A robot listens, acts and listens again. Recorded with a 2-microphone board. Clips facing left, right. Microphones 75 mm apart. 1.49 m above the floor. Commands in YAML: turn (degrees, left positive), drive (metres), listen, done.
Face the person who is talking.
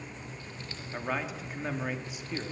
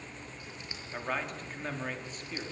turn: 30
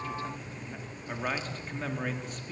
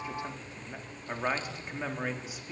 done: "Facing the man speaking."